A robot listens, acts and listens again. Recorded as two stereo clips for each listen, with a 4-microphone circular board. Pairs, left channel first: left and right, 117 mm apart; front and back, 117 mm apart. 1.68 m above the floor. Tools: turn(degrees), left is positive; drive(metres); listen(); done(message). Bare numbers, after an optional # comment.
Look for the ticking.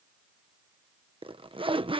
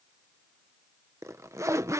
listen()
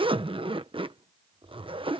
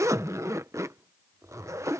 listen()
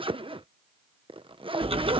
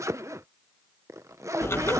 # The ticking: 65° right.
turn(-65)
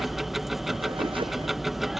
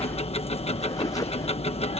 done("Facing the ticking.")